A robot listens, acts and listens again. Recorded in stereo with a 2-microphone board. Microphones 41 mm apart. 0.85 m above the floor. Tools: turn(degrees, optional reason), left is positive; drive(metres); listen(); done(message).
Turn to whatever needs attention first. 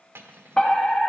turn(degrees=20, reason="The fire alarm: about 20° left or 160° left.")
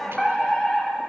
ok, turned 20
done("Found it: a fire alarm, straight ahead, 2 to 4 m away.")